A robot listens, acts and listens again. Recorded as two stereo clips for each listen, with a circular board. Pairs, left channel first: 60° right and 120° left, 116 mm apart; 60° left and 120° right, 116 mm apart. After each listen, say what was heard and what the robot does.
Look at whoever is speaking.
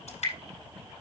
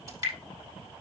Keep listening.
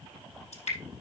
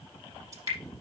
Keep listening.
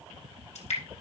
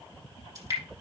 I can't make out anyone speaking, only dripping.